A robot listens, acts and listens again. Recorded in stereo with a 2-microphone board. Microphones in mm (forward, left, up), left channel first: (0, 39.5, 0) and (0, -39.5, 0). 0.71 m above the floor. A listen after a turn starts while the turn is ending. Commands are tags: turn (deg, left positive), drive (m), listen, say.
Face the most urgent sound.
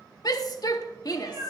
<turn deg="55"/>
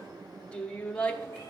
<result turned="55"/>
<turn deg="15"/>
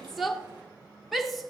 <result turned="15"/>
<say>Found it: a shout, straight ahead, under 1 m away.</say>